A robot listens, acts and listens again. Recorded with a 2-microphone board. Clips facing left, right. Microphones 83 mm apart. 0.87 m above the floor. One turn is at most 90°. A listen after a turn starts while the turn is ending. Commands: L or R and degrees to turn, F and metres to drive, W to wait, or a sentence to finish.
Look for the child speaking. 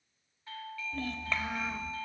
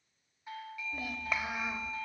R30
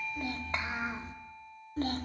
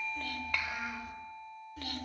L35
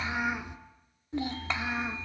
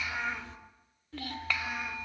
L25
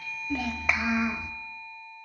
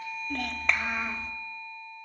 L15
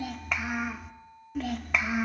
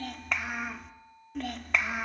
Found it: a child speaking, straight ahead.